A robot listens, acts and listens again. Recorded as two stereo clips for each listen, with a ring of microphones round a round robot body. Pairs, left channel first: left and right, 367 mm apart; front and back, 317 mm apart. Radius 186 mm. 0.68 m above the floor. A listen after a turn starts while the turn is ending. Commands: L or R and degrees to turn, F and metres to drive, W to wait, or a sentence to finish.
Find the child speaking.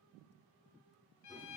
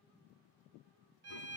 W
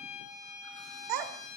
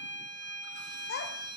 R65
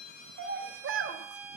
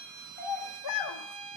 R35
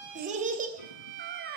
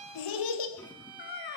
R30
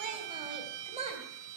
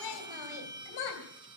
R15
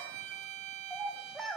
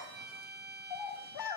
Facing the child speaking, 2 to 4 m away.